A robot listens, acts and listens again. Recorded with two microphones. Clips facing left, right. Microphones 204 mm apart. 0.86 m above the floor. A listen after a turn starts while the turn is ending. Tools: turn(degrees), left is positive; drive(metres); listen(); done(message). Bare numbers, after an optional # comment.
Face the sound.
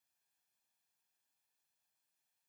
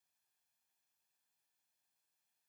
listen()
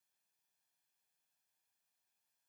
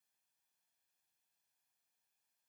listen()
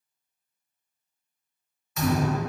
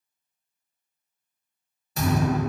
# The thud: about 35° right or 145° right.
turn(-35)
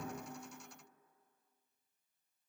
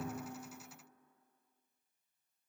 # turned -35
listen()
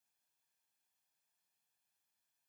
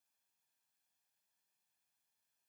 done("I heard a thud, but can't make it out now. It was about straight ahead or 110° right.")